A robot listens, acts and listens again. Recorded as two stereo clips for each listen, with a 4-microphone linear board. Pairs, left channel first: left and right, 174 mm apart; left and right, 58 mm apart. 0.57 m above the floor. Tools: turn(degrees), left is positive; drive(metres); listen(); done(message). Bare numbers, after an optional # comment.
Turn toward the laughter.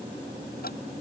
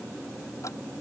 listen()
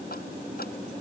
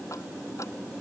listen()
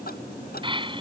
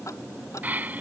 # The laughter: about 30° right or 150° right.
turn(-30)
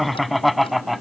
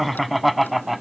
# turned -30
done("Facing the laughter.")